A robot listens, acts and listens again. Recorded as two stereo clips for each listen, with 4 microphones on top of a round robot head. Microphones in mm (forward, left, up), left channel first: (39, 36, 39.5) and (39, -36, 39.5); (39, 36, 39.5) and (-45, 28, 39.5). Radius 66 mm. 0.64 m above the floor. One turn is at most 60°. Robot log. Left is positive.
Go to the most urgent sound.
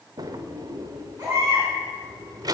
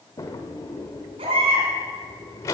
note: The baby crying: 155° right.
cmd yaw -60
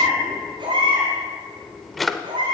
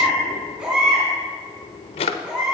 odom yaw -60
note: The baby crying is now 95° right.
cmd yaw -60
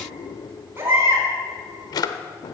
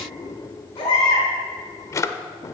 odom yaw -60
note: The baby crying is now 35° right.
cmd yaw -35
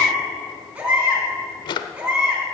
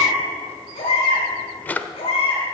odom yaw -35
note: The baby crying is now 20° right.
cmd yaw -20
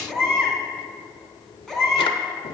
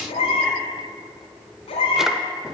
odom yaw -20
cmd fwd 1.0
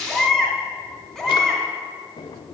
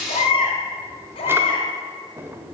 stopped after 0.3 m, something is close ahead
end: Blocked. The baby crying is further on, straight ahead.